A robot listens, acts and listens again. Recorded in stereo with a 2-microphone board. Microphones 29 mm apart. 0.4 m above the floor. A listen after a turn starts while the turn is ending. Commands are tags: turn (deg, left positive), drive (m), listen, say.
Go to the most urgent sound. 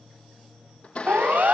<turn deg="-65"/>
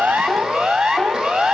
<turn deg="-35"/>
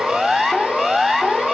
<turn deg="-10"/>
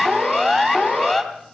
<drive m="1.0"/>
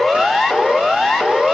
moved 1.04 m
<drive m="1.0"/>
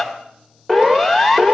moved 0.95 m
<drive m="1.0"/>
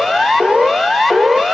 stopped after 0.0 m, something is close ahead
<turn deg="-10"/>
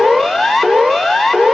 <say>Arrived at the siren, straight ahead.</say>